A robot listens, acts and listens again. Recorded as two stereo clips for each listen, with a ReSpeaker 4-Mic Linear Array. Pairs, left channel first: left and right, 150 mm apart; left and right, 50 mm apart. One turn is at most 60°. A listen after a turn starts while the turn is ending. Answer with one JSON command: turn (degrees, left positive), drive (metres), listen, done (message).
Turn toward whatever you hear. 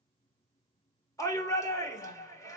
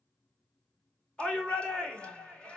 {"turn": 20}
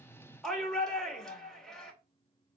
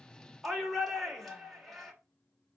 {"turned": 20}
{"done": "Found it: a shout, straight ahead."}